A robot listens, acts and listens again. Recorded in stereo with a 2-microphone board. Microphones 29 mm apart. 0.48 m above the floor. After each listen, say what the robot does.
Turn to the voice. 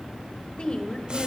Turn 35° left.
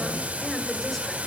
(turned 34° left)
Keep listening.
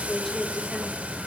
Facing the woman speaking.